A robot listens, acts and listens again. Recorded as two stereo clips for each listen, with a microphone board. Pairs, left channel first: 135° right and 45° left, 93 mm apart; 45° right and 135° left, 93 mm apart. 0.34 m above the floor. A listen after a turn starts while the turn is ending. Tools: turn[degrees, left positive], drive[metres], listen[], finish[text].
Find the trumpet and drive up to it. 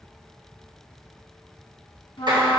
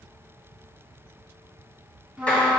Thought: The trumpet: 150° right.
Action: turn[-150]
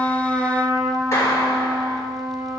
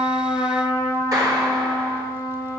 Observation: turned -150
Action: drive[1.0]
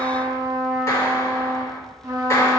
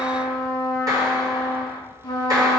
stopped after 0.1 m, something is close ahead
Action: finish[Blocked. The trumpet is further on, straight ahead.]